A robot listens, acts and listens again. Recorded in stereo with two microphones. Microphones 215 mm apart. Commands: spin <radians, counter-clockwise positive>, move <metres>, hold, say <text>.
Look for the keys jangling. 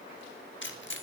spin 1.05
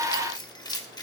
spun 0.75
spin 0.35
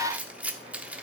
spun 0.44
say Found it: keys jangling, straight ahead, 1 to 2 m away.